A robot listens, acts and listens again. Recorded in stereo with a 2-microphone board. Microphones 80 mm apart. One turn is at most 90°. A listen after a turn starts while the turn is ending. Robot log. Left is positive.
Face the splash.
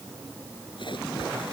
cmd yaw +90
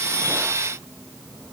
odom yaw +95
end: I heard a splash from this way, but can't make it out now.